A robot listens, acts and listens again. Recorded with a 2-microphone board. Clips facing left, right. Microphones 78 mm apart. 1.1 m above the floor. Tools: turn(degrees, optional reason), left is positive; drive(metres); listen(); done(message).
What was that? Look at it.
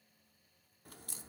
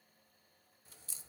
turn(degrees=55, reason="The crack: about 55° left or 125° left.")
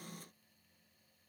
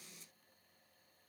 listen()
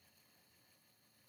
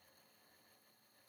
done("I heard a crack, but can't make it out now. It was about straight ahead or 70° left.")